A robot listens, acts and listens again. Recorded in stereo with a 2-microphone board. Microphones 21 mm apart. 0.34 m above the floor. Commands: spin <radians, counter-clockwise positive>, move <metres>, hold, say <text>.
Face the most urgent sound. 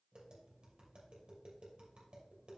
hold
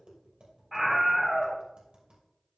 spin -0.52
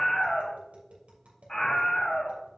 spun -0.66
spin 0.52
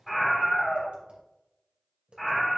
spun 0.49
say Facing the scream, 1 to 2 m away.